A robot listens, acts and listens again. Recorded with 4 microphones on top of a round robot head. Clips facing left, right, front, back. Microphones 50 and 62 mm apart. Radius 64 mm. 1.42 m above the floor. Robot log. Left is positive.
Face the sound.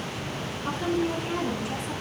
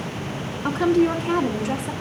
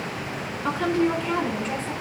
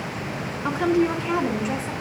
note: The woman speaking: 100° right.
cmd yaw -100
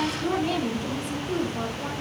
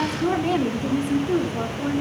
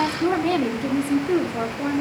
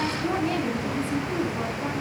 note: The woman speaking is now 30° right.
cmd yaw -30
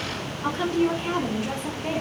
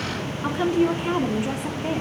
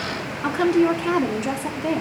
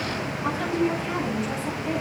note: The woman speaking is now 10° right.
cmd yaw -10
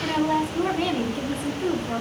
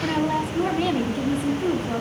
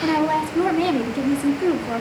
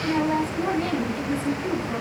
end: Found it: a woman speaking, straight ahead, 2 to 4 m away.